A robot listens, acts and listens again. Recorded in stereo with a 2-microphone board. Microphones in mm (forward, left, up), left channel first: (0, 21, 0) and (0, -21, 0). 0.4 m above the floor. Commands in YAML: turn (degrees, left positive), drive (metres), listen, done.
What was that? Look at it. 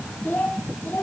turn: 45
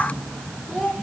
done: "Facing the child speaking."